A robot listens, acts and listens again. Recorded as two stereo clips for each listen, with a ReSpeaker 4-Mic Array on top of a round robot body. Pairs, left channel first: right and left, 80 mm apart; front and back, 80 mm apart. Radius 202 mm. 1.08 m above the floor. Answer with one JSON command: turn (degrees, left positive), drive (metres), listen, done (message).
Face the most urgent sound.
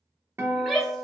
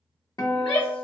{"done": "Found it: a shout, straight ahead."}